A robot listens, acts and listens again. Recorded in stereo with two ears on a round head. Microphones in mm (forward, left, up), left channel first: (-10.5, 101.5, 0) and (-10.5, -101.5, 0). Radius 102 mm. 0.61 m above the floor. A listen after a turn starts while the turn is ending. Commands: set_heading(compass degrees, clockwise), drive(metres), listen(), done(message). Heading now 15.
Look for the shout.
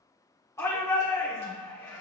set_heading(345)
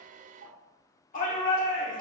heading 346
set_heading(211)
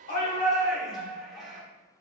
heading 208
done("Facing the shout, 1 to 2 m away.")